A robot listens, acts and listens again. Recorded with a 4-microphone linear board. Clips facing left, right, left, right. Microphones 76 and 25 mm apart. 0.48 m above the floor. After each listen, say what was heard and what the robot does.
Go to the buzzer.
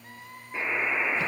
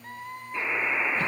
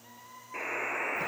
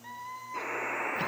The buzzer: about 25° left or 155° left. Turn 25° left.
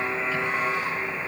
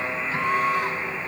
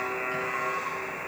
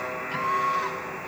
So it is at 125° left. Turn 125° left.
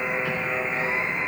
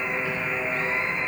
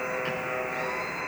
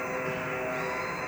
The buzzer is now 35° left. Turn 35° left.
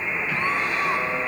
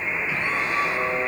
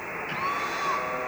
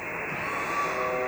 The buzzer is now 25° right. Turn 25° right.
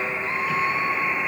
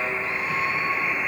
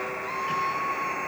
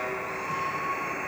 Drive 1.0 m forward.
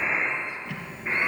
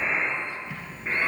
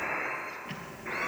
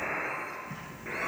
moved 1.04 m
Drive 1.0 m forward.
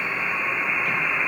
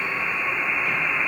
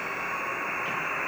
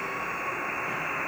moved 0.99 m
Drive 1.0 m forward.
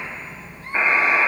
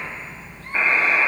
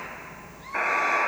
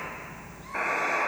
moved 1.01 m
The buzzer is now 15° left. Turn 15° left.
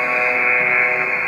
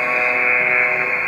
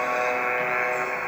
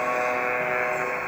Drive 1.0 m forward.
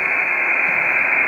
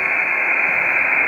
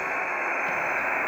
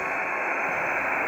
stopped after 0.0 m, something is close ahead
I am next to the buzzer.